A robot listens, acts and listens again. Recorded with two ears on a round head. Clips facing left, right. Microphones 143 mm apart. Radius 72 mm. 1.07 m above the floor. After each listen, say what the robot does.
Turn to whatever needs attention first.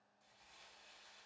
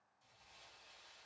Keep listening.
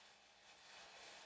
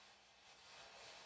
Keep listening.
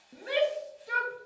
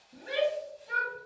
Turn 65° left.
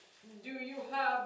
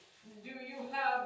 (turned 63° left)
Turn 55° left.
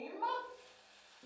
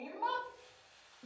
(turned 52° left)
Found it: a shout, straight ahead, 1 to 2 m away.